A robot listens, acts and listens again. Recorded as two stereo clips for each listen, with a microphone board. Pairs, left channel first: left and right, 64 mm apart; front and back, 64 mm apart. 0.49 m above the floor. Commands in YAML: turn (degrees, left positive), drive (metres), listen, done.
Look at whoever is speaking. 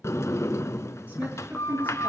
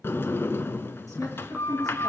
turn: -25
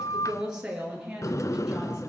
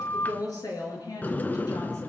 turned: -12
turn: -10
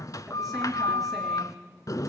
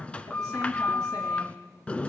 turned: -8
listen: true
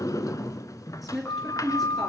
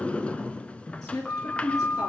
done: "Facing the woman speaking, over 4 m away."